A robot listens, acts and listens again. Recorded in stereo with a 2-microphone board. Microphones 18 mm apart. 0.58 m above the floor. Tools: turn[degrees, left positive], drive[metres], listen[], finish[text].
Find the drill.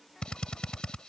Thought: The drill: about 60° left or 120° left.
Action: turn[60]
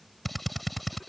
Action: finish[Found it: a drill, straight ahead.]